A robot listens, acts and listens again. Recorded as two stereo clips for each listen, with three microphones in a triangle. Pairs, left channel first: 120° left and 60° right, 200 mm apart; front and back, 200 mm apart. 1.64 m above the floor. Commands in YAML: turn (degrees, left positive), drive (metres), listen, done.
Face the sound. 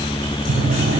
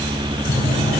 turn: -50
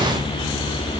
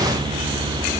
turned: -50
listen: true
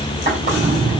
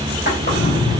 turn: -15
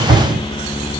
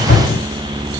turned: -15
done: "Found it: a drawer, straight ahead."